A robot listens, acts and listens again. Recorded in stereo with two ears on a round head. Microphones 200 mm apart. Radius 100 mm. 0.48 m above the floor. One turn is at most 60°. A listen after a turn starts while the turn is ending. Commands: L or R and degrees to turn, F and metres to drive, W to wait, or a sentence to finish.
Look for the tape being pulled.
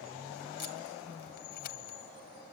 W
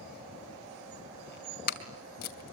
L45
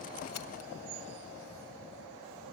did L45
W
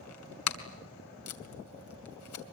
L60
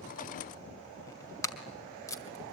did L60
L15
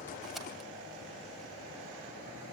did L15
W
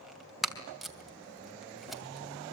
Found it: tape being pulled, straight ahead, 2 to 4 m away.